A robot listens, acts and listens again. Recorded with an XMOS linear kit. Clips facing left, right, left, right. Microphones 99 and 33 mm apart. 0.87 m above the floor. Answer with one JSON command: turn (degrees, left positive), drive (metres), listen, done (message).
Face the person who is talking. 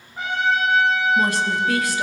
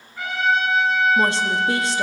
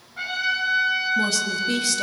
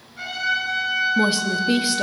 {"turn": -25}
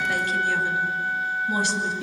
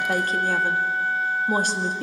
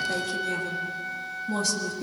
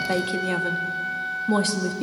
{"turn": -120}
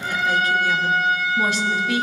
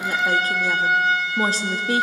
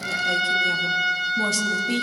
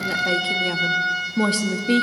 {"turn": -45}
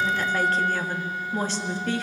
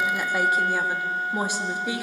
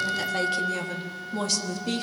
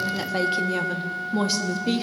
{"turn": -15}
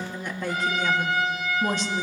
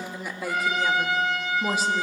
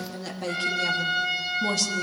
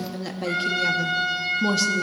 {"done": "Facing the woman speaking."}